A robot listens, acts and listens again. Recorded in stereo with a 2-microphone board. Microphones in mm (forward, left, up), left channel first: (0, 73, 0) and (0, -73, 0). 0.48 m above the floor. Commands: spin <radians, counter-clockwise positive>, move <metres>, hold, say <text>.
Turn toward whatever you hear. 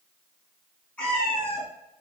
spin 0.52
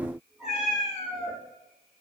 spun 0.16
spin 0.52
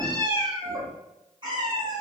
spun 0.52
spin -0.52
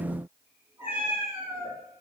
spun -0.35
spin -0.17
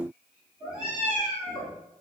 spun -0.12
say Found it: a cat meowing, straight ahead.